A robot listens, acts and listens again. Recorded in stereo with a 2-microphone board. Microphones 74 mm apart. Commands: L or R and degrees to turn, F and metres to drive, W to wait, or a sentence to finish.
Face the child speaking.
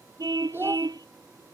R30
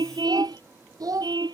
R125
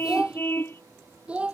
R15
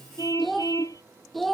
Facing the child speaking.